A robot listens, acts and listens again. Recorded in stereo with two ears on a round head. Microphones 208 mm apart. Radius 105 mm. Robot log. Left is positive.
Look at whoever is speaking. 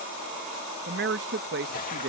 note: The man speaking: about 50° right or 130° right.
cmd yaw -50
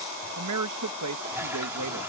note: So it is at 80° right.
cmd yaw -80
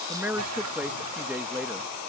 end: Facing the man speaking.